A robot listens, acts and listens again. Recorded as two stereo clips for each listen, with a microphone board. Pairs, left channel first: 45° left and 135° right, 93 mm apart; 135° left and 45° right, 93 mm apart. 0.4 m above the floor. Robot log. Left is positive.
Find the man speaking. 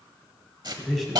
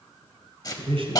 note: The man speaking: 45° right.
cmd yaw -45
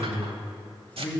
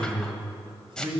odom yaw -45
note: The man speaking is now 30° right.
cmd yaw -30
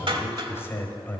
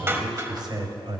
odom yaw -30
note: The man speaking is now 25° right.
cmd yaw -25
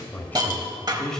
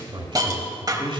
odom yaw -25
note: The man speaking is now 40° right.
cmd yaw -40
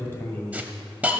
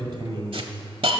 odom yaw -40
note: The man speaking is now 25° right.
cmd yaw -25
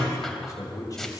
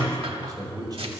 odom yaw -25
end: Found it: a man speaking, straight ahead, 1 to 2 m away.